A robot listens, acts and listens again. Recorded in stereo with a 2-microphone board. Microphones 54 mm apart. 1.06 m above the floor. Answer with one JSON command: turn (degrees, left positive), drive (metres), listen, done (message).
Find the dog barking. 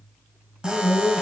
{"turn": -30}
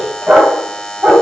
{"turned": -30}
{"turn": -145}
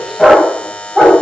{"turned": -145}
{"done": "Facing the dog barking."}